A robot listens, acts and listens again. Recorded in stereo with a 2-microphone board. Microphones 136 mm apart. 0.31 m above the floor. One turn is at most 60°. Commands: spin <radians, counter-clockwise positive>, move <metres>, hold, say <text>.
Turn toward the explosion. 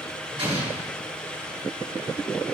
spin -0.70
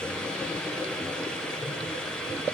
hold
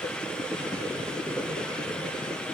say I heard an explosion, but can't make it out now. It was about straight ahead or 100° right.